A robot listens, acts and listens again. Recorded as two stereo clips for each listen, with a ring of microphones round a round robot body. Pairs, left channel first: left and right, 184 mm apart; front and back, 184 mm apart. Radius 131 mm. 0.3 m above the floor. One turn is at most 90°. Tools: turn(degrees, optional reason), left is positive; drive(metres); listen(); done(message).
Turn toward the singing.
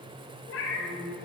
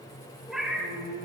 turn(degrees=-90, reason="The singing: 160° right.")
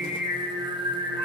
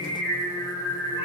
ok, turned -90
turn(degrees=-80, reason="The singing is now 80° right.")
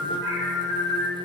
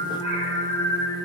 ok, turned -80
done("Found it: singing, straight ahead, 2 to 4 m away.")